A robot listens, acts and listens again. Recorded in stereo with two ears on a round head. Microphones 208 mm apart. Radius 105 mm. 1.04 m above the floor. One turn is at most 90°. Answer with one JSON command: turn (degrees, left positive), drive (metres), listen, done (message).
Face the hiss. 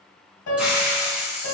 {"turn": -30}
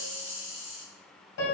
{"turn": 25}
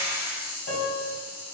{"turn": -10}
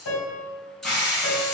{"done": "Facing the hiss."}